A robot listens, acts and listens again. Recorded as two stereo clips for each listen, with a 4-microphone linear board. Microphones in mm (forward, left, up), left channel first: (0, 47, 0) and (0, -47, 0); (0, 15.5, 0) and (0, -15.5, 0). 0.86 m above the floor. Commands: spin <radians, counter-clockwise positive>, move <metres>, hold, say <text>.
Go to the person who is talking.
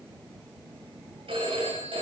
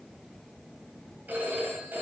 hold
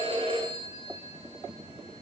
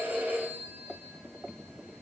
hold
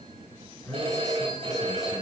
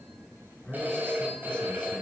spin 0.61
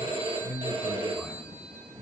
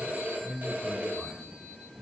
move 1.0
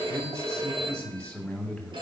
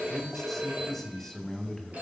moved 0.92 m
move 1.0
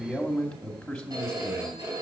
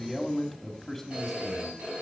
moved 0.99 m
move 1.0
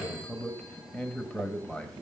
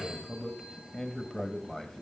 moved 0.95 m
spin 0.17
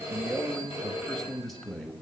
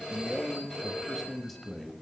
move 1.0
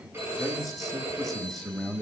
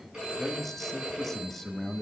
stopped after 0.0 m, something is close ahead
say I am next to the man speaking.